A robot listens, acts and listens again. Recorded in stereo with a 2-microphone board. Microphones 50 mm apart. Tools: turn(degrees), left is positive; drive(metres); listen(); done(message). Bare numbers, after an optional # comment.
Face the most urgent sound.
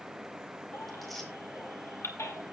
turn(90)
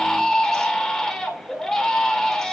# So it is at 10° left.
turn(10)
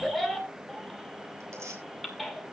done("Found it: a baby crying, straight ahead.")